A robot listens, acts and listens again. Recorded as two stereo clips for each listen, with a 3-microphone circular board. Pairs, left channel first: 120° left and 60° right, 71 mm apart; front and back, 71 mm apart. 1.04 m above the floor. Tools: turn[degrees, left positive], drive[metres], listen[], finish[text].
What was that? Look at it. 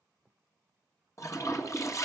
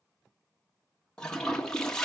Thought: The toilet flushing: 80° left.
Action: turn[80]
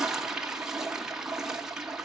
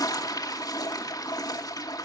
Thought: The toilet flushing is now 20° left.
Action: turn[20]
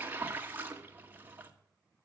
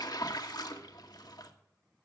Action: finish[Found it: a toilet flushing, straight ahead.]